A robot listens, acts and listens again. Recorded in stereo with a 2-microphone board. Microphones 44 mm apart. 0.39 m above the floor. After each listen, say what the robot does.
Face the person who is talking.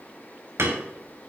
Keep listening.
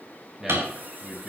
Turn 30° right.
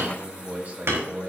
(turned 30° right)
Turn 140° right.
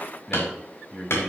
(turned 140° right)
Turn 10° left.
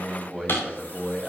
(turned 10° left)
Facing the man speaking, 1 to 2 m away.